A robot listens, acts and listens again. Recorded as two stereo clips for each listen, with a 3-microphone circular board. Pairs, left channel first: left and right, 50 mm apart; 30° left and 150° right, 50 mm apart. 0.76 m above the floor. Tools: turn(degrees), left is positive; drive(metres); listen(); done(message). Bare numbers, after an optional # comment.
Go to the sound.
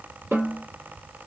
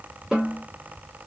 # The snare drum: 70° right.
turn(-70)
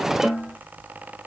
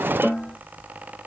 drive(1.0)
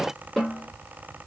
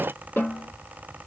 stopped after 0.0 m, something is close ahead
done("Something is in my way. I am facing the snare drum but have not reached it.")